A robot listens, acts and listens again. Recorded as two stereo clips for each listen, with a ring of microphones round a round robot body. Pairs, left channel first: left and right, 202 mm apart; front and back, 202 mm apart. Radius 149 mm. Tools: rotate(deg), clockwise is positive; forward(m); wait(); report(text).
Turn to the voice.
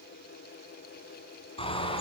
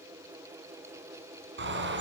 wait()
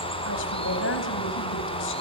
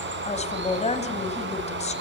rotate(-55)
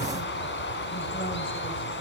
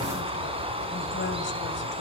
wait()
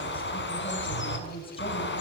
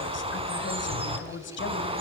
rotate(-20)
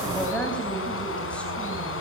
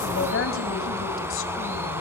report("Facing the woman speaking.")